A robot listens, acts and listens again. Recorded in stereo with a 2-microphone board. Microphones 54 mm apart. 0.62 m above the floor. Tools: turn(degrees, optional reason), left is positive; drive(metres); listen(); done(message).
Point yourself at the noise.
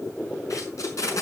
turn(degrees=90)
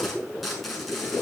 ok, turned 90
done("Facing the tape being pulled, over 4 m away.")